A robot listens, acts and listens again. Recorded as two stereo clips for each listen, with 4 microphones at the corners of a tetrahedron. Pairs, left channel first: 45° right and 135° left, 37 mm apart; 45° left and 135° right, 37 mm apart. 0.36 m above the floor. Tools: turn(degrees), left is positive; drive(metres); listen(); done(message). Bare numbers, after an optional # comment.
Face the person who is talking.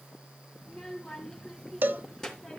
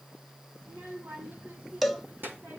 # The child speaking: 130° right.
turn(-130)
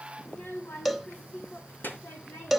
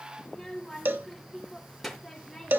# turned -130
# The child speaking is now 45° right.
turn(-45)
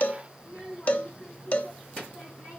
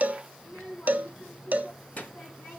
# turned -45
done("Found it: a child speaking, straight ahead.")